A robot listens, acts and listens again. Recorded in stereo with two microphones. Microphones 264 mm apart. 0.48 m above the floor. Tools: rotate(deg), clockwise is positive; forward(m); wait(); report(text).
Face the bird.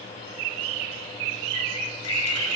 rotate(-75)
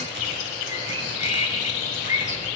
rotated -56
rotate(-30)
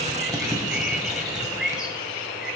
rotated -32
report("Facing the bird.")